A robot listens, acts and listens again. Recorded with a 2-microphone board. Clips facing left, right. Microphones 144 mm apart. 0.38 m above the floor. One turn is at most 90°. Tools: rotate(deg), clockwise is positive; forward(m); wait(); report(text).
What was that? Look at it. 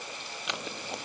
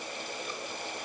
rotate(-90)
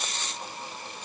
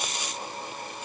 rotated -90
rotate(10)
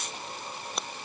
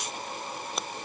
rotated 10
report("Found it: scissors, straight ahead.")